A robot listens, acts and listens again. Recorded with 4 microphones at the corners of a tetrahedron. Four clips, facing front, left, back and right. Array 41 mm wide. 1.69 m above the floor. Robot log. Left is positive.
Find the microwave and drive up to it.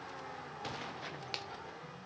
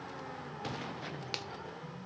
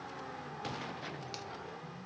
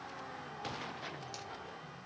cmd idle
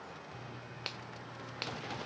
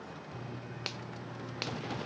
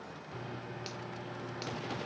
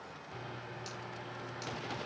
note: The microwave: 130° right.
cmd yaw -130
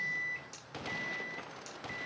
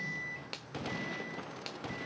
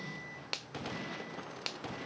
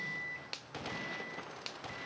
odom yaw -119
note: The microwave is now 10° right.
cmd yaw -10
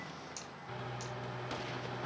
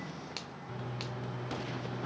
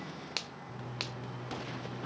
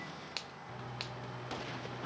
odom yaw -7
cmd fwd 1.0
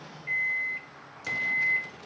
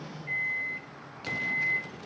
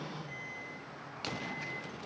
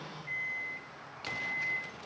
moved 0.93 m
cmd fwd 1.0
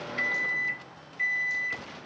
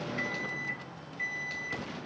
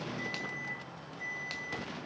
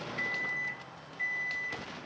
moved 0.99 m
cmd fwd 1.0
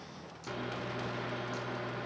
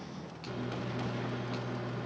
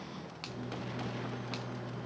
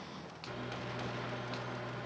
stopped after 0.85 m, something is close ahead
note: The microwave is now 15° right.
cmd yaw -15
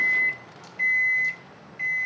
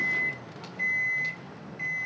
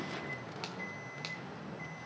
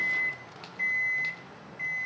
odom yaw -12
end: Arrived at the microwave, straight ahead.